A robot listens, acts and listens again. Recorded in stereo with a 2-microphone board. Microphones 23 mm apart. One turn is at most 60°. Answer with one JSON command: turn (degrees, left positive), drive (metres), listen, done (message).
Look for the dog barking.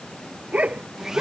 {"turn": -60}
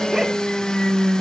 {"listen": true}
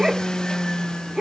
{"turn": -20}
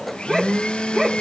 {"done": "Facing the dog barking."}